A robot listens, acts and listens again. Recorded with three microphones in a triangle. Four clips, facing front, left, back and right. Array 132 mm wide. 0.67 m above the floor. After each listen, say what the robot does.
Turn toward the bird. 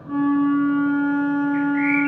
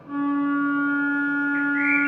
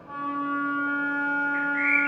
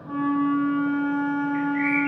Turn 60° right.
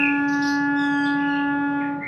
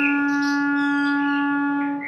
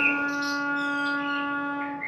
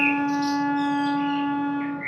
Facing the bird.